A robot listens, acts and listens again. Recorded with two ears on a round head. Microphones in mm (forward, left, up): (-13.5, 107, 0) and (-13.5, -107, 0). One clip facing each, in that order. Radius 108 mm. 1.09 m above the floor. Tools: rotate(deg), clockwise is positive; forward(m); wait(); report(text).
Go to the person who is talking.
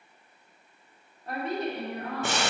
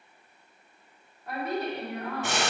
rotate(-30)
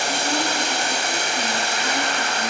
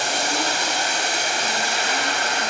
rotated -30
wait()
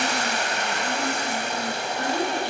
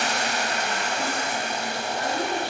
rotate(-125)
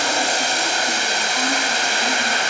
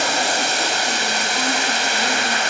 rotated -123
wait()
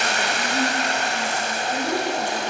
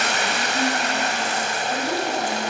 forward(1.0)
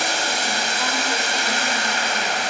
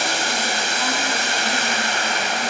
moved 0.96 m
wait()
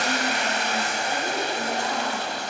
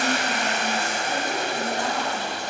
wait()
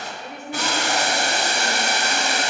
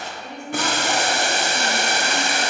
forward(1.0)
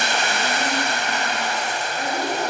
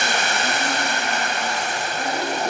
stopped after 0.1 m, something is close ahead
wait()
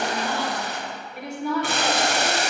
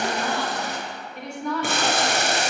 report("I am next to the woman speaking.")